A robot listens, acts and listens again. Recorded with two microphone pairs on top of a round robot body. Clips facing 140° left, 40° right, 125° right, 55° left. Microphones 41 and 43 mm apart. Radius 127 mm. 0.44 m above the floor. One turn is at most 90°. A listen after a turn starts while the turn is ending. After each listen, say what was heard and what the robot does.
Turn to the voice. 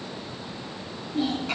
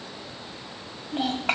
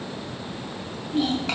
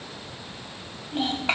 Facing the child speaking.